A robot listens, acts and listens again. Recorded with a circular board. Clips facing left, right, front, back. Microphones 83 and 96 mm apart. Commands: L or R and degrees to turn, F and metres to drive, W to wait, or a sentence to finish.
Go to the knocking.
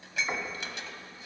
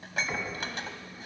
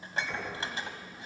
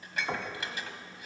L150
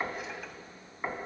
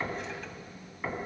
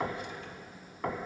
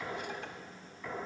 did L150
L20
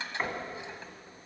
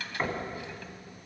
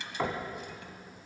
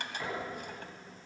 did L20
F1.0
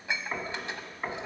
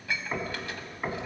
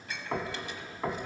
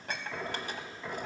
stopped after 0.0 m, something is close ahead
Something is in my way. I am facing the knocking but have not reached it.